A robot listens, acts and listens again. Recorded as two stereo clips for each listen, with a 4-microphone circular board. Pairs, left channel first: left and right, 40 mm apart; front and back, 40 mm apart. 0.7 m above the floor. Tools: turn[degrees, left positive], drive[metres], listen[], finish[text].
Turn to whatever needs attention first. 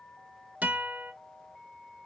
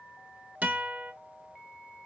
Action: listen[]
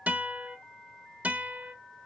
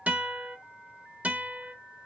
Action: listen[]
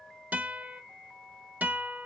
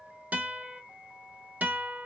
Action: finish[I can't make out anything urgent, only a guitar.]